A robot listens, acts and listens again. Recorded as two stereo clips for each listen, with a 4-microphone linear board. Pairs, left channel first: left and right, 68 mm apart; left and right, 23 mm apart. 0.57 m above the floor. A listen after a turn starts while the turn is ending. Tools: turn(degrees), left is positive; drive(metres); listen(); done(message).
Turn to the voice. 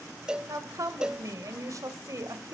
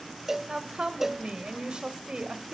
turn(degrees=-55)
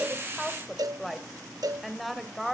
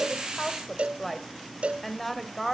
done("Found it: a woman speaking, straight ahead, 2 to 4 m away.")